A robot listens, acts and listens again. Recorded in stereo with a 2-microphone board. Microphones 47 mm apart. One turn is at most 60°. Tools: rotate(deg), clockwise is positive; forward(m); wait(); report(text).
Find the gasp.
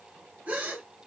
rotate(30)
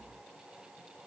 wait()
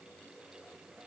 report("I heard a gasp, but can't make it out now. It was about straight ahead or 120° right.")